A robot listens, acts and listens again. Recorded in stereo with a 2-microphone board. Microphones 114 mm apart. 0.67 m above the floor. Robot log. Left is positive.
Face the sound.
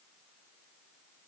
cmd idle
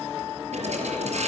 cmd yaw -90
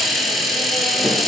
end: Found it: a hiss, straight ahead, over 4 m away.